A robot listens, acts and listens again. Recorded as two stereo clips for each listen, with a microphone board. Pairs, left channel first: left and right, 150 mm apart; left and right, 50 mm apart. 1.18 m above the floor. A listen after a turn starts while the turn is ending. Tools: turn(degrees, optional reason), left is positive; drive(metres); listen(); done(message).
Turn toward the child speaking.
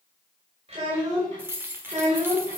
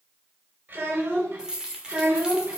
turn(degrees=-55, reason="The child speaking: about 55° right or 125° right.")
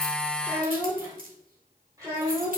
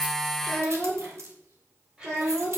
turn(degrees=-25, reason="So it is at 25° right.")
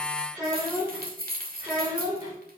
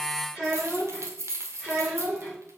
turn(degrees=-20, reason="The child speaking is now 20° right.")
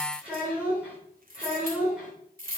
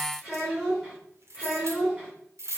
done("Facing the child speaking, 2 to 4 m away.")